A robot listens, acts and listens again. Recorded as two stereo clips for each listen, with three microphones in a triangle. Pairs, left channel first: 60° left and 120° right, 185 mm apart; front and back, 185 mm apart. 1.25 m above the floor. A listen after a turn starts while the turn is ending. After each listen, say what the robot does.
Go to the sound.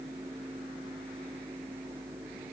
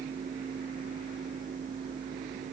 Keep listening.
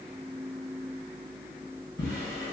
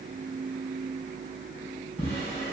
Turn 60° left.
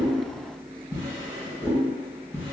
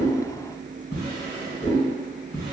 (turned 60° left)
Drive 1.0 m forward.
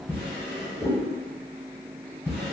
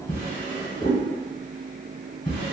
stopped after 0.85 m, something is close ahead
Turn 10° right.
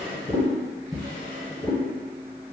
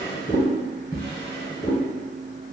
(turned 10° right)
I am next to the drawer.